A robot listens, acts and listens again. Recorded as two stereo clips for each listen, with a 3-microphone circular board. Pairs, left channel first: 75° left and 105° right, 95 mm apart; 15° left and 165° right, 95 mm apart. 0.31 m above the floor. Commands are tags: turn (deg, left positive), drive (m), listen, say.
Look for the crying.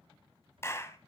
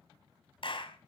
<listen/>
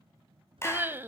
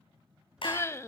<turn deg="-40"/>
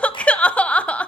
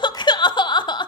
<say>Facing the crying.</say>